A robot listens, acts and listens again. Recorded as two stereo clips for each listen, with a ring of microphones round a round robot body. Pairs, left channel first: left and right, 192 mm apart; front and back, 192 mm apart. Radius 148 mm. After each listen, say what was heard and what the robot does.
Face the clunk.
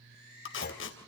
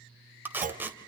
The clunk: 135° left. Turn 135° left.
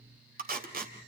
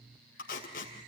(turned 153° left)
Nothing new. It was at 20° right. Turn 20° right.
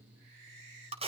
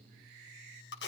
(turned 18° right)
I heard a clunk from this way, but can't make it out now.